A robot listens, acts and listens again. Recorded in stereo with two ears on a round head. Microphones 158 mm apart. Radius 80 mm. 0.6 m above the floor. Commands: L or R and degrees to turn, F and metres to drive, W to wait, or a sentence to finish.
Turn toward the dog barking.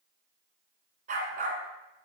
R45
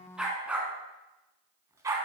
R15
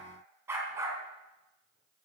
R15
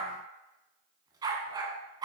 R20
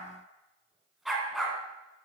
Found it: a dog barking, straight ahead.